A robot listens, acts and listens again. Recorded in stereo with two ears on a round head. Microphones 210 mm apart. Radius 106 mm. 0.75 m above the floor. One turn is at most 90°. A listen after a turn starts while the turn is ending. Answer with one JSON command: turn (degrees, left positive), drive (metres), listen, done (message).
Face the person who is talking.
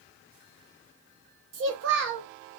{"turn": -55}
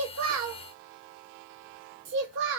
{"turn": -60}
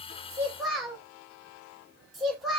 {"done": "Found it: a child speaking, straight ahead, under 1 m away."}